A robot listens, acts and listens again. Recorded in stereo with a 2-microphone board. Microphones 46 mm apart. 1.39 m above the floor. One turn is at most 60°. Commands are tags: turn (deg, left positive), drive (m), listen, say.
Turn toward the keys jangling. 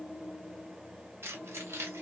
<turn deg="-60"/>
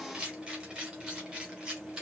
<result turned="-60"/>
<turn deg="-20"/>
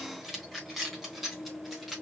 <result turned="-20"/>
<say>Found it: keys jangling, straight ahead.</say>